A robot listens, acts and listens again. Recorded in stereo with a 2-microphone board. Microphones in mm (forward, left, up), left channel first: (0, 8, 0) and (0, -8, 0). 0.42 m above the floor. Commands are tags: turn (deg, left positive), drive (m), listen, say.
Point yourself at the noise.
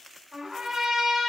<turn deg="-65"/>
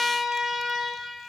<turn deg="-40"/>
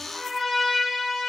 <turn deg="10"/>
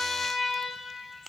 <say>Facing the trumpet, 2 to 4 m away.</say>